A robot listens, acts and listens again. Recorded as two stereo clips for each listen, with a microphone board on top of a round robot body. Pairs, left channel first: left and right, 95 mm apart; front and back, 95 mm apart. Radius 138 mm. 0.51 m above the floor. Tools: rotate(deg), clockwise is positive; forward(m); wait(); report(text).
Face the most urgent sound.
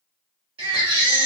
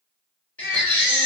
rotate(75)
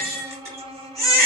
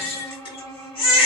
rotate(30)
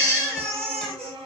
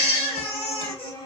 rotate(25)
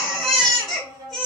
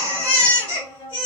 report("Facing the baby crying, 2 to 4 m away.")